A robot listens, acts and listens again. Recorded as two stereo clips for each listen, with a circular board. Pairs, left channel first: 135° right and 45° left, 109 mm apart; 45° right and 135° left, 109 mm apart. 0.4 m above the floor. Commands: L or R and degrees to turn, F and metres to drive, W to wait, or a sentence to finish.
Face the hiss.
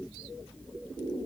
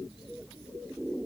W
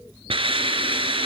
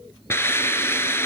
L20
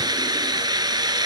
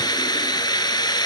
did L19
Found it: a hiss, straight ahead.